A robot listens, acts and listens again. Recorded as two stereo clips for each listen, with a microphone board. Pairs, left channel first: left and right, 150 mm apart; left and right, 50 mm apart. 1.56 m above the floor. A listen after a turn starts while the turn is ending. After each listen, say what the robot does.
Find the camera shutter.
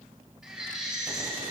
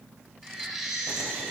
Keep listening.
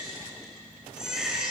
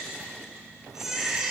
Keep listening.
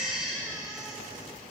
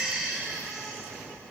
I can't make out a camera shutter to turn to.